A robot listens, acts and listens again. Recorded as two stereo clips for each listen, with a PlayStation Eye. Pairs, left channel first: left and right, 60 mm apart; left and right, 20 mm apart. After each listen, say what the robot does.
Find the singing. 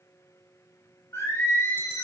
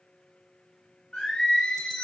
Turn 55° left.
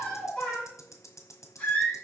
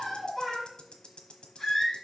Turn 25° left.
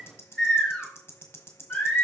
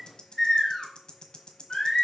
Turn 20° left.
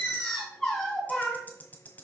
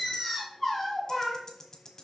Found it: singing, straight ahead, 2 to 4 m away.